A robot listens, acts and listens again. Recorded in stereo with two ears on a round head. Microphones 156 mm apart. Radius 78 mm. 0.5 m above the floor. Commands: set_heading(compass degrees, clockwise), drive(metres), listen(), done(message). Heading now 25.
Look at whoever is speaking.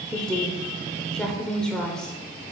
set_heading(355)
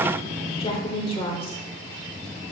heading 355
set_heading(210)
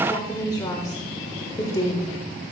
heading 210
set_heading(185)
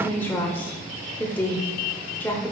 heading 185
set_heading(170)
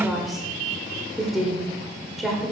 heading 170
done("Found it: a woman speaking, straight ahead, 1 to 2 m away.")